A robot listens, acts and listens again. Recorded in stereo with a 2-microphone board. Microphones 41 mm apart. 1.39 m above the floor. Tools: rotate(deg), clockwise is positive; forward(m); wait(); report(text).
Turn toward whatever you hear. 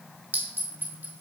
rotate(60)
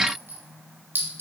rotate(60)
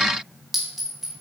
report("Facing the clink.")